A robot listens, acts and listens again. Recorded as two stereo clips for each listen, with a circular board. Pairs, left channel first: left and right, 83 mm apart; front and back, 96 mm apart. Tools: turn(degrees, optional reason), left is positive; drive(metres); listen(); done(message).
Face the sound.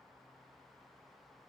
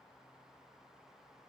listen()
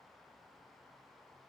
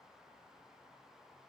listen()
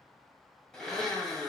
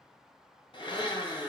done("Found it: a blender, straight ahead.")